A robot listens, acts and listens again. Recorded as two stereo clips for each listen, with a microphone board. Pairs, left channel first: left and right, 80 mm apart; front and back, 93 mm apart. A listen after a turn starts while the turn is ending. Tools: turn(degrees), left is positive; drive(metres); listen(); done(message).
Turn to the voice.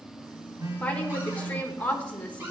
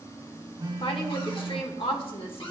turn(degrees=15)
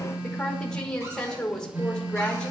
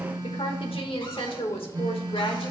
turn(degrees=10)
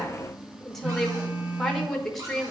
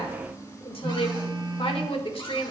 done("Facing the woman speaking, 1 to 2 m away.")